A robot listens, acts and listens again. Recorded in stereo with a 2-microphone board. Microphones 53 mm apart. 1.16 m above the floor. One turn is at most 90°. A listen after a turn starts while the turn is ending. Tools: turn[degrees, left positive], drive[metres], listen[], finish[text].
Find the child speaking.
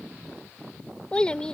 Thought: The child speaking: about 15° left or 165° left.
Action: turn[15]
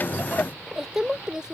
Thought: So it is at 15° right.
Action: turn[-15]
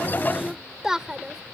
Thought: The child speaking is now 10° right.
Action: turn[-10]
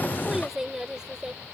Thought: The child speaking is now 15° right.
Action: turn[-15]
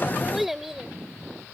Action: finish[Found it: a child speaking, straight ahead.]